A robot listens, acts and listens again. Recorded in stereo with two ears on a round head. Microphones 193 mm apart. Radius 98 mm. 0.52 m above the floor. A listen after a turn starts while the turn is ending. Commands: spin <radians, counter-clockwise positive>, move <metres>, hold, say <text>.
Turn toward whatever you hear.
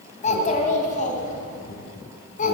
spin 0.70
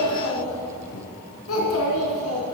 spin 1.75
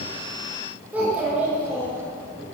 say Found it: a child speaking, straight ahead.